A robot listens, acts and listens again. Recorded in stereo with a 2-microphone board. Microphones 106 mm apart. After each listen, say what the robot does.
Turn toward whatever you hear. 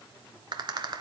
Turn 50° right.
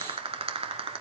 Turn 80° right.
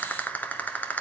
Turn 20° left.
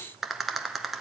Facing the rattle, 1 to 2 m away.